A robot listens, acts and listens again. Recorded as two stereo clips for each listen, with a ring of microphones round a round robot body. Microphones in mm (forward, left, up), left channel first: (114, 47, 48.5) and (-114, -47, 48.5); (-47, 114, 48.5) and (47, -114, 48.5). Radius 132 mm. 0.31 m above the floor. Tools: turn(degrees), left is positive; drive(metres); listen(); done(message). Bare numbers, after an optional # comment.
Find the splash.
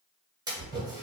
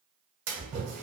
# The splash: 85° right.
turn(-85)
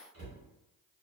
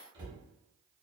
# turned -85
done("Facing where the splash came from. I can't hear it now.")